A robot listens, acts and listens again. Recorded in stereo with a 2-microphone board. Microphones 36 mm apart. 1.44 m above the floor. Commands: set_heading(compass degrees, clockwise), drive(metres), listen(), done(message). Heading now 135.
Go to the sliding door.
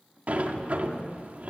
set_heading(185)
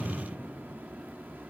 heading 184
set_heading(264)
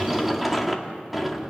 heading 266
drive(1.0)
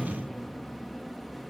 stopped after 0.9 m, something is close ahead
done("I am next to the sliding door.")